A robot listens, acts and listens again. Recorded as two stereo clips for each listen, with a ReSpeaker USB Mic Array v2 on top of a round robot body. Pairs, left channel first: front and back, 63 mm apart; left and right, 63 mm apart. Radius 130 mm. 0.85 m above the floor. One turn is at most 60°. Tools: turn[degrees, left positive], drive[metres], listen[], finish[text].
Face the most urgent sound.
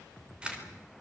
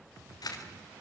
Action: listen[]
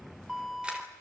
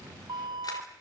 Thought: The alarm: 95° right.
Action: turn[-60]
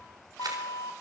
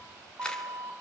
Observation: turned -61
Thought: The alarm is now 35° right.
Action: turn[-35]
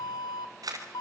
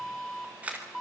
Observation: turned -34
Action: finish[Facing the alarm.]